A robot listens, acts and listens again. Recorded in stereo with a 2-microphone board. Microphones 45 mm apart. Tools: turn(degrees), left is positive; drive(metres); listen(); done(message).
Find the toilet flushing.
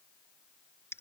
listen()
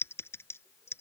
listen()
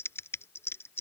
done("I can't make out a toilet flushing to turn to.")